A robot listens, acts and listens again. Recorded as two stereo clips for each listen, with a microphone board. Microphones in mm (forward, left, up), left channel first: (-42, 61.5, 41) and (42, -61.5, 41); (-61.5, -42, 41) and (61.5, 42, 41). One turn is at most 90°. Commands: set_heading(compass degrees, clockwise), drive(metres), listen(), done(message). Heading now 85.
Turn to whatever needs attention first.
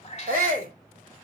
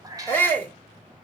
set_heading(155)
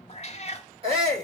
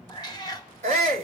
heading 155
done("Found it: a shout, straight ahead.")